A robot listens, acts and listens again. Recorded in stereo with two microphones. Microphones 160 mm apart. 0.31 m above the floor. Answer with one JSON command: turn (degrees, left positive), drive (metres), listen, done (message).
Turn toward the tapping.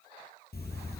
{"listen": true}
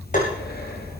{"turn": 50}
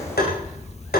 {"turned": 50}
{"turn": 75}
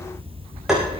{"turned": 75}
{"done": "Facing the tapping."}